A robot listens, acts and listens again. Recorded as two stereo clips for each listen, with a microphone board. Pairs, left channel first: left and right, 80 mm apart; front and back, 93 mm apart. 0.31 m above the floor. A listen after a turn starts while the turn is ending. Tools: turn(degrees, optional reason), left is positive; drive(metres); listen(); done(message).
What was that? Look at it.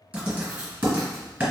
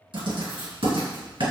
turn(degrees=-165, reason="The writing: 165° right.")
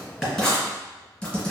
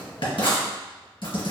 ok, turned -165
turn(degrees=10, reason="The writing is now 10° left.")
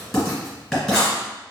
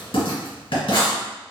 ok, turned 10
done("Found it: writing, straight ahead, 1 to 2 m away.")